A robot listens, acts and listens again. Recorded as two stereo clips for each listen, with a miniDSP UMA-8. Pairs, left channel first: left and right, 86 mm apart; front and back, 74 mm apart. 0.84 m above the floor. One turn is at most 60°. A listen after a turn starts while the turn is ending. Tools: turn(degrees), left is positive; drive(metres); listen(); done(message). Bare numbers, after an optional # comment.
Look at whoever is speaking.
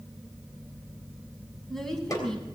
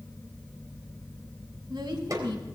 # The woman speaking: 175° left.
turn(60)
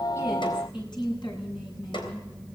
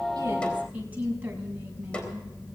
# The woman speaking is now 115° left.
turn(60)
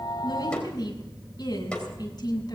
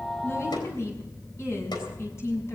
# The woman speaking is now 50° left.
turn(50)
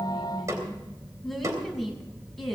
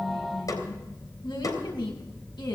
done("Found it: a woman speaking, straight ahead, over 4 m away.")